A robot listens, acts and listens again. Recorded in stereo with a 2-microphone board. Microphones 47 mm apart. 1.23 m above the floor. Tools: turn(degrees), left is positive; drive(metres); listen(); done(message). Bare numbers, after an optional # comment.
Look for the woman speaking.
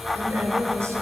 turn(-90)
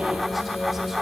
done("Found it: a woman speaking, straight ahead.")